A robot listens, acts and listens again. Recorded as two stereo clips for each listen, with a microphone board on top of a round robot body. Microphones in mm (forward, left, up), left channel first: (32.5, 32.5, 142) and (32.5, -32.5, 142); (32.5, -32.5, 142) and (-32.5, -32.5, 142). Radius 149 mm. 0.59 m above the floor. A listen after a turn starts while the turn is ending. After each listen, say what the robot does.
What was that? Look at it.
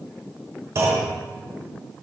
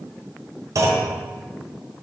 Turn 140° right.
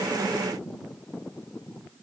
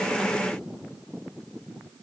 Facing where the clunk came from. I can't hear it now.